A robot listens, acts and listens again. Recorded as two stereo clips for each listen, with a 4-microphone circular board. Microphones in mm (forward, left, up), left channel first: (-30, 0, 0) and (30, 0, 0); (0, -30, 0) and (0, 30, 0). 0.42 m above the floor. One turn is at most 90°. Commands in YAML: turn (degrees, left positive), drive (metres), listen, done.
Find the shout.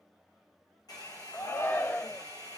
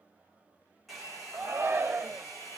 turn: 90
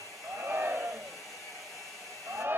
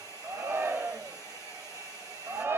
turn: 50
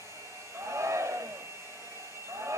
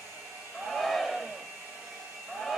done: "Facing the shout."